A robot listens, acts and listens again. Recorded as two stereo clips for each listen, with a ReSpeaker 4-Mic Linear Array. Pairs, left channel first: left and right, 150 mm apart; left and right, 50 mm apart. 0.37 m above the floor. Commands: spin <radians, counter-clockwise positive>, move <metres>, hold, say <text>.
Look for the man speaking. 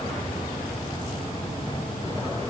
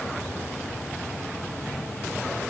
hold
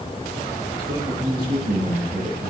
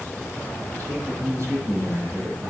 spin -1.05
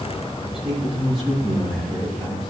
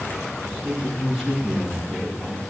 say Facing the man speaking.